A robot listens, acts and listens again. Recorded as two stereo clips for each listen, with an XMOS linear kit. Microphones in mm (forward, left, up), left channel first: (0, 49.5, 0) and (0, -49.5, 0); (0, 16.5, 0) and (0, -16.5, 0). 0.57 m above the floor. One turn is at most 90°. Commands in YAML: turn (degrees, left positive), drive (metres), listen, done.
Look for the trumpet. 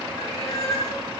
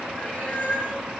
listen: true
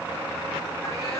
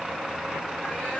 listen: true
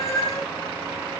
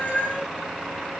done: "I can't make out a trumpet, only a cat meowing."